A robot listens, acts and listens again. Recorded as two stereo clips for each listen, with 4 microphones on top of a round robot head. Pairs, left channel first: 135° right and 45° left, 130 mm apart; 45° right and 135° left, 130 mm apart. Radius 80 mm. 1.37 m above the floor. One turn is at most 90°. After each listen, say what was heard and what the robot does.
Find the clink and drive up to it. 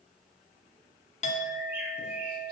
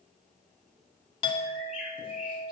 The clink: 95° right. Turn 90° right.
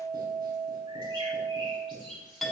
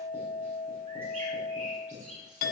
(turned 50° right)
The clink is now 45° right. Turn 45° right.
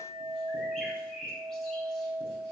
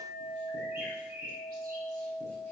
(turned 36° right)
The clink is now 10° right. Turn 10° right.
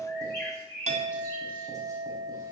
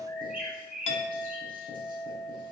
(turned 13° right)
Drive 1.0 m forward.
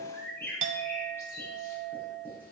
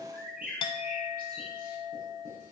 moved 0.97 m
The clink is now 10° left. Turn 10° left.
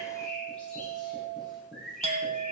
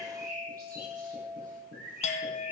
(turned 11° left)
Drive 1.0 m forward.
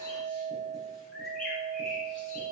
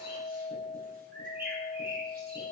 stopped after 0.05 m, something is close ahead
Arrived at the clink, straight ahead.